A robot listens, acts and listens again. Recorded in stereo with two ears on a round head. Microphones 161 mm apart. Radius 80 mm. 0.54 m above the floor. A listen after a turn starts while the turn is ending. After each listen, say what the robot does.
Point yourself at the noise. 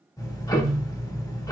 Turn 20° left.
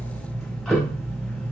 Facing the ticking.